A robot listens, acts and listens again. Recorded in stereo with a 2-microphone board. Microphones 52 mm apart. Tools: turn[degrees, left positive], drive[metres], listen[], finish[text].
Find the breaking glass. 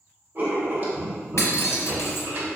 Action: turn[90]
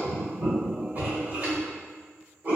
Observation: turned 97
Action: finish[I heard breaking glass from this way, but can't make it out now.]